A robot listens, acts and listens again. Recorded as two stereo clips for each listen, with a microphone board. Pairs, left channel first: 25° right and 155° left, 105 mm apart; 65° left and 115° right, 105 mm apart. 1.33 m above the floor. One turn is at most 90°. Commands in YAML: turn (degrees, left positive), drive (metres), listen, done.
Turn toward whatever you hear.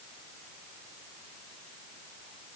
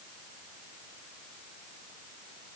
listen: true
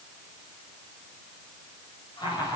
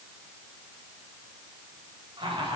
turn: -70
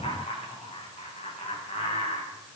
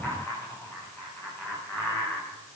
done: "Facing the laughter, over 4 m away."